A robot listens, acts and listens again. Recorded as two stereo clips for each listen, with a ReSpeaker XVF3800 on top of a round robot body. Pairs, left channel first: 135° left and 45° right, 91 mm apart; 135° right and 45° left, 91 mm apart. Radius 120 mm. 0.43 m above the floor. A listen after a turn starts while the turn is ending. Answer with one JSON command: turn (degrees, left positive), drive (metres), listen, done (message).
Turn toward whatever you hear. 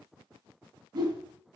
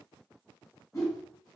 {"turn": -85}
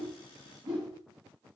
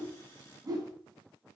{"done": "Facing the whoosh."}